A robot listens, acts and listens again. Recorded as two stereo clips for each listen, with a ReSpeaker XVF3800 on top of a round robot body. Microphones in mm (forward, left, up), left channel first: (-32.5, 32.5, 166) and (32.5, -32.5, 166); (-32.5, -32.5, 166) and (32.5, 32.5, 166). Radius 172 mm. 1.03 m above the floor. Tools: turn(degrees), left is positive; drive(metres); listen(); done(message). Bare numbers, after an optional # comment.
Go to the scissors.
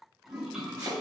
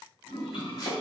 listen()
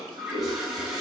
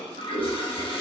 # The scissors: 10° right.
turn(-10)
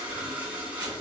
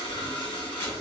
drive(1.0)
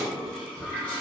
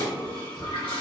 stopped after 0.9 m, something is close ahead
done("Arrived at the scissors, straight ahead.")